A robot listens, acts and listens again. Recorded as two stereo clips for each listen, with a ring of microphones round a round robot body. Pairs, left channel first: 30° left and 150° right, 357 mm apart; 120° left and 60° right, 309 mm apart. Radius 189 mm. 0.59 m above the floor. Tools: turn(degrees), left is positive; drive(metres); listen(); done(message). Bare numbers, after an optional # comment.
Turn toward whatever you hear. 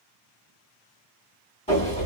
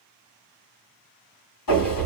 # The sliding door: 105° left.
turn(105)
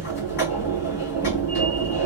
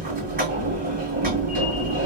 done("Facing the sliding door, 2 to 4 m away.")